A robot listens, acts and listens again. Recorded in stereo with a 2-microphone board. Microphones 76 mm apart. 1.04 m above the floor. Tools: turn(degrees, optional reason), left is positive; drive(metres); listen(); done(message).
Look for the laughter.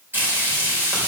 listen()
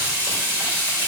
listen()
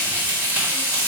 done("I can't make out laughter, only frying.")